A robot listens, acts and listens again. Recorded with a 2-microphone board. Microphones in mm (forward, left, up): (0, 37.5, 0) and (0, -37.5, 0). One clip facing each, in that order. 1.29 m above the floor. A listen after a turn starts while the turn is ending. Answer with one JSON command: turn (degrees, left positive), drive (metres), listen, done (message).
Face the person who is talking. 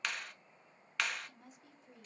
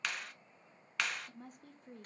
{"turn": -45}
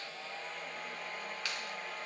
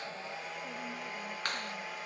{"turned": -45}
{"listen": true}
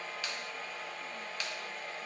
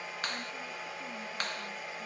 {"listen": true}
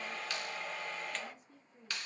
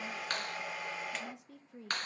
{"turn": -85}
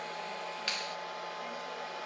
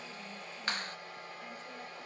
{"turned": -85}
{"listen": true}
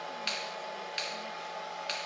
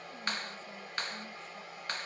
{"listen": true}
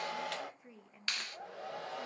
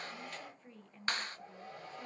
{"turn": 10}
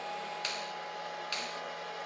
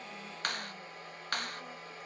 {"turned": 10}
{"listen": true}
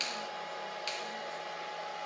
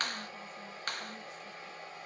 {"listen": true}
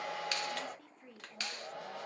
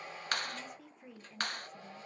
{"done": "Facing the woman speaking, under 1 m away."}